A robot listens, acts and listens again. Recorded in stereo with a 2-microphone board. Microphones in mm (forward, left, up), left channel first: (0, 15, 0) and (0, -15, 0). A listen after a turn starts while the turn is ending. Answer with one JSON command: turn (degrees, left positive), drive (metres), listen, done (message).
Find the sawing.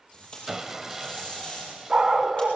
{"turn": -30}
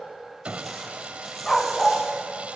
{"turn": -135}
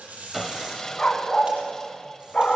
{"turn": 15}
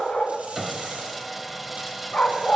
{"done": "Facing the sawing."}